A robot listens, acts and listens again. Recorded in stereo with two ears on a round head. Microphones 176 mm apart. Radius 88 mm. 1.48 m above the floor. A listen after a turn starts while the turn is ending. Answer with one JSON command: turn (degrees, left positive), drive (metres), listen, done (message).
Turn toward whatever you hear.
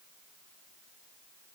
{"listen": true}
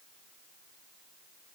{"listen": true}
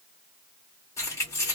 {"turn": 30}
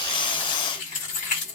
{"turn": 135}
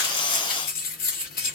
{"turn": 50}
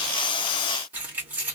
{"turn": -10}
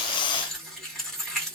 {"done": "Facing the keys jangling."}